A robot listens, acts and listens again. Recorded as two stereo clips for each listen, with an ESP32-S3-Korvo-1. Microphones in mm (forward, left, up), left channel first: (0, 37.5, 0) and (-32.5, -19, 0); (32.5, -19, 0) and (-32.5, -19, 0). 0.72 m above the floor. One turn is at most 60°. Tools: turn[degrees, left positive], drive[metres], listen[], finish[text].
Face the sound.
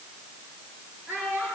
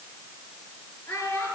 Thought: The child speaking: 60° right.
Action: turn[-60]
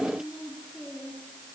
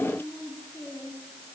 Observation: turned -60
Thought: The child speaking is now 25° right.
Action: turn[-25]
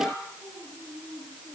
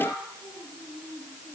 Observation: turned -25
Action: finish[Facing the child speaking, over 4 m away.]